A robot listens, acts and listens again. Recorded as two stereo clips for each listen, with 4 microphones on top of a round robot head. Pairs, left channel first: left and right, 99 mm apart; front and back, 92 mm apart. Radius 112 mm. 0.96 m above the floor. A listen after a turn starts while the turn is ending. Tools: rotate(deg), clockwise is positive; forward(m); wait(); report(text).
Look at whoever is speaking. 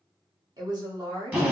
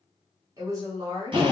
rotate(130)
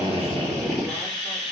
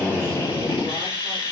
wait()
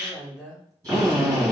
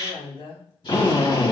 report("Found it: a woman speaking, straight ahead, 1 to 2 m away.")